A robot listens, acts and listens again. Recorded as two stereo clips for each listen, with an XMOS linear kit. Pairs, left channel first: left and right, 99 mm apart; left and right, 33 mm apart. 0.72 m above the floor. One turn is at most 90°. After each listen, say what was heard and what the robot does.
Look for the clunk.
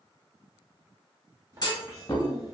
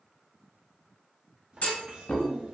The clunk: about 45° left or 135° left. Turn 45° left.
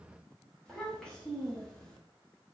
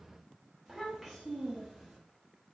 Keep listening.
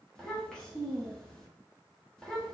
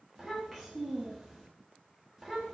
I heard a clunk, but can't make it out now. It was about straight ahead or 90° left.